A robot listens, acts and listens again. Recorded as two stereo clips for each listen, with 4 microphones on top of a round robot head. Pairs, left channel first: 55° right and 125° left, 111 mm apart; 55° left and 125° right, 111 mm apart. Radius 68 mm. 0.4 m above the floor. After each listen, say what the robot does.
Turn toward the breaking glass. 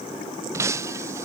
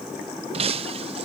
Turn 165° right.
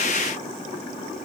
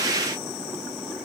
I heard breaking glass from this way, but can't make it out now.